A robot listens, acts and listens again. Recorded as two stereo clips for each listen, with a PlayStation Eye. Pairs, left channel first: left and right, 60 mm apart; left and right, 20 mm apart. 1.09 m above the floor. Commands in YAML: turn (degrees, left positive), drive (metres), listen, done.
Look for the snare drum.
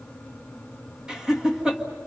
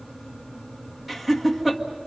listen: true
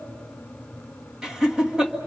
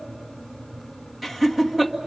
listen: true
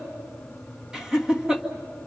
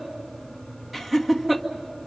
done: "I can't make out a snare drum to turn to."